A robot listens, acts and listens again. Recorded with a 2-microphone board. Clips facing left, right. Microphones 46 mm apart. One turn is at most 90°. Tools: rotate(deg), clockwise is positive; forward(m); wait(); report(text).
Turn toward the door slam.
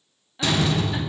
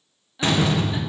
rotate(30)
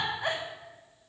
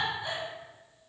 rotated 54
wait()
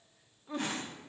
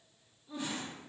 report("I heard a door slam, but can't make it out now. It was about 25° left or 95° right.")